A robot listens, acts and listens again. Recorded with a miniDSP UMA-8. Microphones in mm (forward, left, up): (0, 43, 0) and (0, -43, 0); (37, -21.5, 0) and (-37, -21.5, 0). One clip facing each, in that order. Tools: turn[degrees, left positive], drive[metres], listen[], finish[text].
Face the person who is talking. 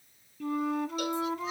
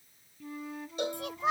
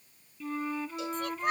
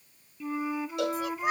Thought: The child speaking: 95° right.
Action: turn[-95]
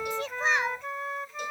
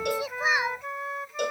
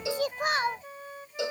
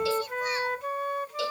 Thought: The child speaking is now 10° right.
Action: turn[-10]
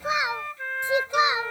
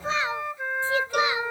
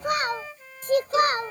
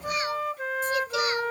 Thought: The child speaking is now 25° left.
Action: turn[25]
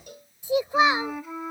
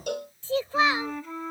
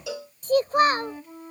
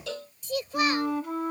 Thought: The child speaking is now 30° left.
Action: turn[30]
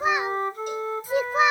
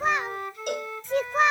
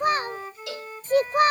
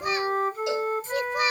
Thought: The child speaking is now 10° left.
Action: turn[10]
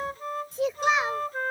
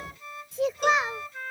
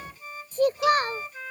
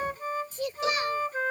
Action: finish[Found it: a child speaking, straight ahead.]